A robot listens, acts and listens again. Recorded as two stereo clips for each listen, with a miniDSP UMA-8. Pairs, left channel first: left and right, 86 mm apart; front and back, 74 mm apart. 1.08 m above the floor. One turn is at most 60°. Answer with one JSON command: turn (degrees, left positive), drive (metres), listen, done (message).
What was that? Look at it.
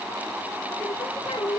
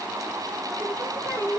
{"turn": 60}
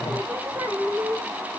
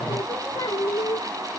{"turn": -25}
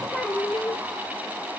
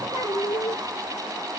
{"turn": 15}
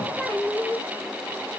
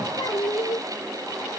{"done": "Found it: singing, straight ahead."}